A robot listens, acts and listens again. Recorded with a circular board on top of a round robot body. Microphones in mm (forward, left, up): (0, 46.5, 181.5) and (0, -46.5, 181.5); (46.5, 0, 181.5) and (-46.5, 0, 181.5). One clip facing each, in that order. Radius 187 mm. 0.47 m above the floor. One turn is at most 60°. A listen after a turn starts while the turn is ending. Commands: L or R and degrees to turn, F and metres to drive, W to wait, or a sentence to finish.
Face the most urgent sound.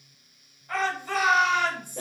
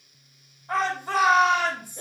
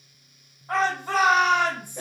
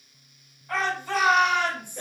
R40
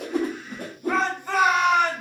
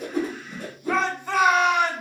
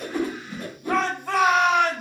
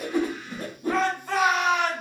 Found it: a shout, straight ahead, 1 to 2 m away.